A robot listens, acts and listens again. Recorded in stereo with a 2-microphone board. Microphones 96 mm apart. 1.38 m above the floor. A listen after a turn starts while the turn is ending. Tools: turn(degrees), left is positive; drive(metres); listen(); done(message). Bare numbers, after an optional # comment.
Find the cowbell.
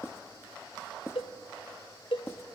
# The cowbell: about 65° left or 115° left.
turn(65)
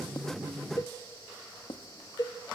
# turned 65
# So it is at 45° left.
turn(45)
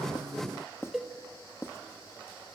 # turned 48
done("Facing the cowbell, under 1 m away.")